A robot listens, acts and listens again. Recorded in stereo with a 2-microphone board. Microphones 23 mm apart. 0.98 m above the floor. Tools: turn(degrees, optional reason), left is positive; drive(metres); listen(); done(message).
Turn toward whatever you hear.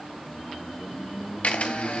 turn(degrees=75, reason="The camera shutter: about 75° left or 105° left.")
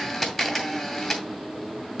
turn(degrees=20, reason="So it is at 20° left.")
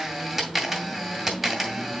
done("Found it: a camera shutter, straight ahead, 2 to 4 m away.")